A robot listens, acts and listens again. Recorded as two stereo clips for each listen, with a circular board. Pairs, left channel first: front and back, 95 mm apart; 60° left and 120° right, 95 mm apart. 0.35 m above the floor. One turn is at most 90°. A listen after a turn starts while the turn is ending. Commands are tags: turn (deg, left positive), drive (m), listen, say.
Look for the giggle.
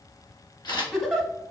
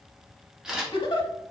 <turn deg="90"/>
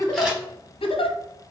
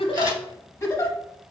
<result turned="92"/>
<say>Found it: a giggle, straight ahead.</say>